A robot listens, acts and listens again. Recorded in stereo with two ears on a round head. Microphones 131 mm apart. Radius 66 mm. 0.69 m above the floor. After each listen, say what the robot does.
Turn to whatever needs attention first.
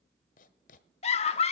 Turn 45° left.
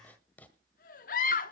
Turn 80° left.
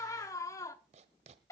Turn 25° left.
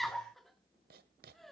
Found it: a scream, straight ahead, 1 to 2 m away.